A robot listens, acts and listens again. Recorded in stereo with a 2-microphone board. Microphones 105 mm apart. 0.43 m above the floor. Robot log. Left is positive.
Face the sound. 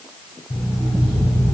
note: The alarm clock: about 70° left or 110° left.
cmd yaw +70
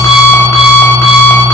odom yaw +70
note: So it is at 35° left.
cmd yaw +35
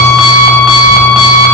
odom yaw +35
end: Found it: an alarm clock, straight ahead.